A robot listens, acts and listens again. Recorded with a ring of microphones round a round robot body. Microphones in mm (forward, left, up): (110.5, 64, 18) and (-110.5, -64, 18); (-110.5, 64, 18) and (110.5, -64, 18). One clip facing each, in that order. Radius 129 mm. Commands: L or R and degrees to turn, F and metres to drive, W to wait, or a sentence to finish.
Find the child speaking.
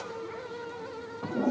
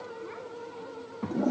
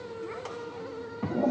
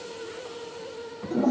L155
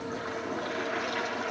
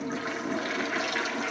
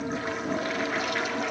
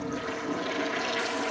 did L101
L55
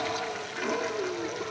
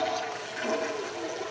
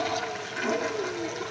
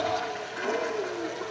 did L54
W
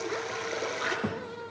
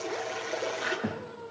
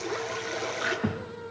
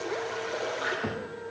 L110
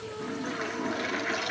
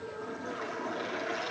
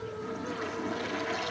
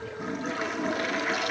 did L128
R20
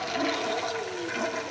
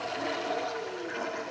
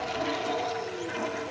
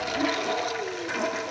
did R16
W
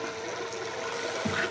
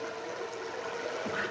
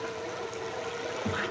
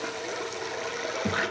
Facing the child speaking, 1 to 2 m away.